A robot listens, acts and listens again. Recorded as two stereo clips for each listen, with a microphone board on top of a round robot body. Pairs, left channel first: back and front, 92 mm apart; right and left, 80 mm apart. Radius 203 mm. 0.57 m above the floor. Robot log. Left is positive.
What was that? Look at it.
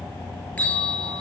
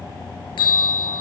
note: The bell: 105° right.
cmd yaw -105
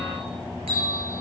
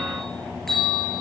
end: Facing the bell.